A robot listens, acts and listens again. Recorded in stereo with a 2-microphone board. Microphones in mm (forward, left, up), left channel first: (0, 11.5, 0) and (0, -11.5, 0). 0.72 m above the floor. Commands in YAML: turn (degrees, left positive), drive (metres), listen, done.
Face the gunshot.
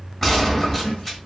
turn: 30
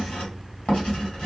listen: true
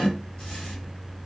done: "I heard a gunshot, but can't make it out now. It was about 20° right or 140° left."